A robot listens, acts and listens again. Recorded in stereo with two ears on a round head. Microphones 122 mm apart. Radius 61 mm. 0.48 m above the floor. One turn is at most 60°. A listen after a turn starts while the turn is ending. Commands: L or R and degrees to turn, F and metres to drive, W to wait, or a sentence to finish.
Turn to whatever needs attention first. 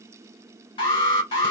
L40
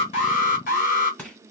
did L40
L60
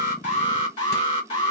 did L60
L45
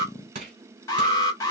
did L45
L25
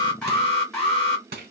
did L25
Found it: an alarm, straight ahead, 1 to 2 m away.